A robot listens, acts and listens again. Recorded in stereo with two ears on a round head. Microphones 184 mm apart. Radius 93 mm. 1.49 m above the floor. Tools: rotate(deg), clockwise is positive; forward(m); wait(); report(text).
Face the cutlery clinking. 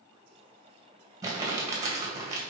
wait()
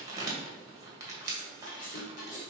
rotate(-40)
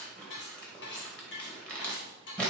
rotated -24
rotate(-115)
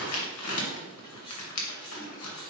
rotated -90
rotate(-25)
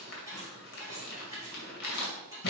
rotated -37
rotate(15)
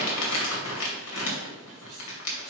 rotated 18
wait()
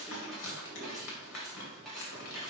report("Facing the cutlery clinking.")